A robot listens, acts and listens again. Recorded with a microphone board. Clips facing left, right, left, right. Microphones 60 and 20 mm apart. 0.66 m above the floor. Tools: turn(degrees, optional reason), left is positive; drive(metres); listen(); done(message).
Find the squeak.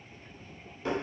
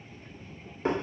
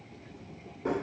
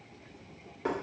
listen()
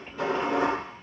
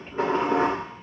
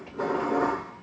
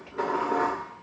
listen()
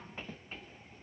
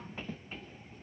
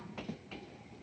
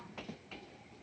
done("I can't make out a squeak, only dishes clattering.")